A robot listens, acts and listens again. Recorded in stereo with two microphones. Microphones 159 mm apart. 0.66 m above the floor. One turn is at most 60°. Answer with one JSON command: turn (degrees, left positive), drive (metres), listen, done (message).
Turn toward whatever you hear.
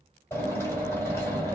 {"turn": 30}
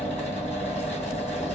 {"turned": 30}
{"turn": 60}
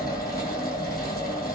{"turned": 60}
{"turn": 60}
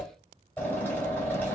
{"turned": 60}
{"turn": 15}
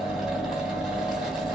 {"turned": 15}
{"done": "Facing the drill."}